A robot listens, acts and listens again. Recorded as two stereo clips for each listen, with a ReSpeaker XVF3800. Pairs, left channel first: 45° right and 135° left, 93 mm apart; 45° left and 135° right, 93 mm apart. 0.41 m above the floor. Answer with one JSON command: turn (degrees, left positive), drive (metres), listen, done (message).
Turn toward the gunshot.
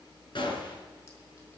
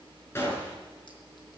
{"turn": -15}
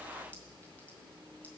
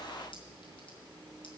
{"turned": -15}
{"done": "Facing where the gunshot came from. I can't hear it now."}